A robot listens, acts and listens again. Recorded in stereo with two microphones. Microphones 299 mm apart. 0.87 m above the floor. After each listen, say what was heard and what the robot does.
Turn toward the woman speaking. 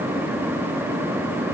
Keep listening.
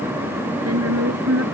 The woman speaking: about 50° right or 130° right. Turn 50° right.
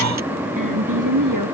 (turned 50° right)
So it is at 80° right. Turn 80° right.
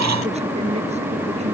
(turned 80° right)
Keep listening.
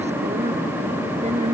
Keep listening.
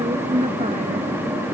The woman speaking is now 20° right. Turn 20° right.
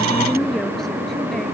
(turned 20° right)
Facing the woman speaking.